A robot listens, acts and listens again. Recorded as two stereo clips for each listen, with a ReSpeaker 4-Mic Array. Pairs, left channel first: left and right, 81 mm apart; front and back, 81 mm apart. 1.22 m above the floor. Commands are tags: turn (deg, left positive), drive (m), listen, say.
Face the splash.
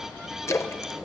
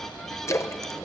<turn deg="45"/>
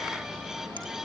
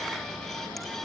<say>Facing where the splash came from. I can't hear it now.</say>